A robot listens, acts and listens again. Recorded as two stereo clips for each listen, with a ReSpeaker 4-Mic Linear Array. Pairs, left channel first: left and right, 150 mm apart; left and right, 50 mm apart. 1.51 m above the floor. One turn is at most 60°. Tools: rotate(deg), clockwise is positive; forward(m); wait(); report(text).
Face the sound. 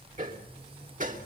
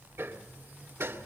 rotate(60)
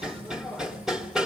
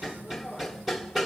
report("Facing the hammering, 2 to 4 m away.")